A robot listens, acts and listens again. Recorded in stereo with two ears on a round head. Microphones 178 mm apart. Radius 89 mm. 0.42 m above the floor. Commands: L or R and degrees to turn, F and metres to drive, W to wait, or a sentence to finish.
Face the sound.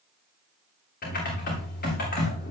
L45
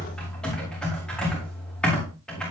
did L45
Found it: typing on a keyboard, straight ahead, over 4 m away.